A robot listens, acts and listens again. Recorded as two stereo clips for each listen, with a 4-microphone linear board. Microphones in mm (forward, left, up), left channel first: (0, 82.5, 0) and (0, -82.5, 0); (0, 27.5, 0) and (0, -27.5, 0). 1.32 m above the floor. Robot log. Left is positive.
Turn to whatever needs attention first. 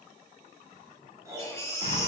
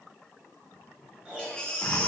note: The baby crying: about 20° left or 160° left.
cmd yaw +20
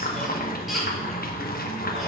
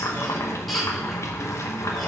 cmd idle
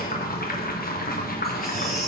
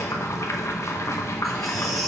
cmd idle
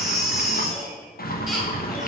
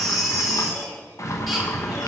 end: Found it: a baby crying, straight ahead.